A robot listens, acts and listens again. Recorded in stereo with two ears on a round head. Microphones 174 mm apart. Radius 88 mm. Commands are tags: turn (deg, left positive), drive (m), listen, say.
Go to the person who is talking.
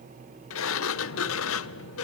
<listen/>
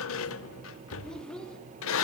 <turn deg="30"/>
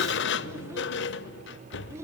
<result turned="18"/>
<turn deg="-15"/>
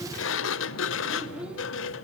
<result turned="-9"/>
<drive m="1.0"/>
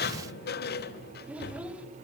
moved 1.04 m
<drive m="1.0"/>
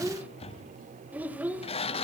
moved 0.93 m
<turn deg="-10"/>
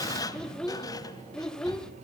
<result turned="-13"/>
<drive m="1.0"/>
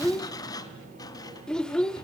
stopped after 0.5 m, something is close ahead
<say>I am next to the child speaking.</say>